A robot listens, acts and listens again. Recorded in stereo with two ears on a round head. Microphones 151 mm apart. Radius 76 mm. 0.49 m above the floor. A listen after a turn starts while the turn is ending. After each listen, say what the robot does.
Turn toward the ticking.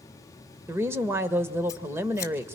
Keep listening.
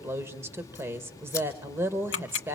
Turn 90° left.
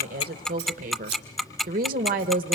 Facing the ticking, under 1 m away.